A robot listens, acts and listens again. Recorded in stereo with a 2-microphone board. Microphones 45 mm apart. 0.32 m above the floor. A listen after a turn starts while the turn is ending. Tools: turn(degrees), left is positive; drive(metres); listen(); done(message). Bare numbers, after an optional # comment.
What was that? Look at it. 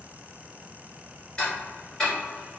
# The ticking: about 20° left or 160° left.
turn(20)
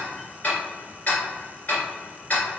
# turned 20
# So it is at 140° left.
turn(140)
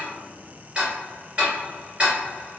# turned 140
# The ticking is now 30° right.
turn(-30)
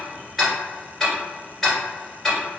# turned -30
done("Found it: ticking, straight ahead, 1 to 2 m away.")